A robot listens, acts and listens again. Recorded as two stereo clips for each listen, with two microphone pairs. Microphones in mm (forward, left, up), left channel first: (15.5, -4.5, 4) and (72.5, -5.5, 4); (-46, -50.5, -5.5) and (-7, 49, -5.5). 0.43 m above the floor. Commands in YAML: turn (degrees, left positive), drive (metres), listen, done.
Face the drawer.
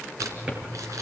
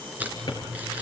turn: -65
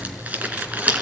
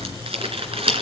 listen: true
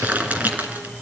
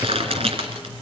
listen: true
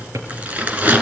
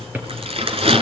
done: "Found it: a drawer, straight ahead, over 4 m away."